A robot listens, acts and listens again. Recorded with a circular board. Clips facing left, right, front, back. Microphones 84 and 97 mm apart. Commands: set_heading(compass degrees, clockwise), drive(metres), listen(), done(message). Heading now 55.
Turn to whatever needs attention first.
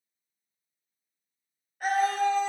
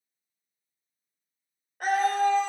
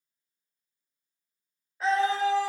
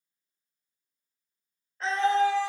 set_heading(140)
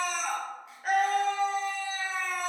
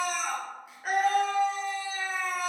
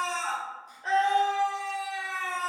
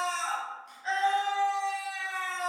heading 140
done("Facing the scream, 1 to 2 m away.")